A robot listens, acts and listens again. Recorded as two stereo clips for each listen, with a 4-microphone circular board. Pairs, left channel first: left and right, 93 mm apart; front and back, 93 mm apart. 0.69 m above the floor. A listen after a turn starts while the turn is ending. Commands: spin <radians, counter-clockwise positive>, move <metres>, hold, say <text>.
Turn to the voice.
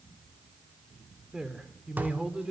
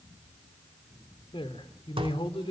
spin -0.17
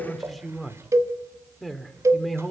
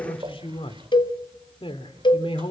say Found it: a man speaking, straight ahead.